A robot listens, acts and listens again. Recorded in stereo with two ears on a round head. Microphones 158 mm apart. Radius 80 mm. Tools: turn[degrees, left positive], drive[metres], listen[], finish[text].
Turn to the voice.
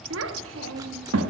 Action: turn[-90]
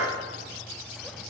Action: listen[]
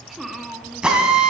Action: finish[Found it: a child speaking, straight ahead, 1 to 2 m away.]